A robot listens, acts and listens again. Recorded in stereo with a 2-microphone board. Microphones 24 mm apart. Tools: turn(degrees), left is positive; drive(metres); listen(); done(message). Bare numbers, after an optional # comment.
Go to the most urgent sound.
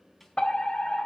# The fire alarm: about 35° left or 145° left.
turn(35)
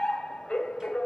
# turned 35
# So it is at 105° left.
turn(105)
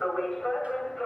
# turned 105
# The fire alarm is now 30° left.
turn(30)
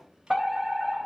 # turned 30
drive(1.0)
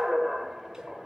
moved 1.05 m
# The fire alarm is now 15° right.
turn(-15)
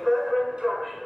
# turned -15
drive(1.0)
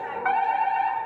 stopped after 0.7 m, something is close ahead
done("I am next to the fire alarm.")